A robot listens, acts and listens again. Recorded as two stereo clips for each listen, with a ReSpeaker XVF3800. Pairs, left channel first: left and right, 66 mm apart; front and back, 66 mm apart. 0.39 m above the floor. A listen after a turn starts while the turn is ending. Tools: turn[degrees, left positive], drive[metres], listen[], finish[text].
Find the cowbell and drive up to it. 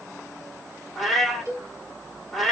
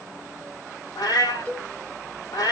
Thought: The cowbell: 55° right.
Action: turn[-55]
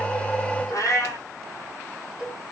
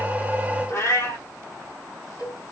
Action: drive[1.0]
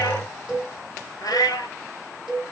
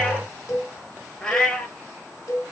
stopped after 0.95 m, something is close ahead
Thought: The cowbell is now 10° right.
Action: turn[-10]
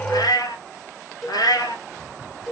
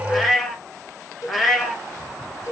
Action: finish[Arrived at the cowbell, straight ahead.]